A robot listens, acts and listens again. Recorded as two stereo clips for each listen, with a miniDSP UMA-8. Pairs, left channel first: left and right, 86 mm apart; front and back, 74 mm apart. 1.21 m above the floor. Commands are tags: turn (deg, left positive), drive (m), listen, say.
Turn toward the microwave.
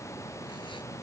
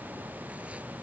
<listen/>
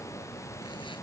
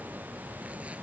<listen/>
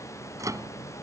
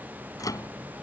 <turn deg="-40"/>
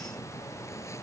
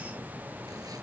<listen/>
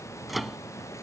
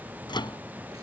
<say>Found it: a microwave, straight ahead.</say>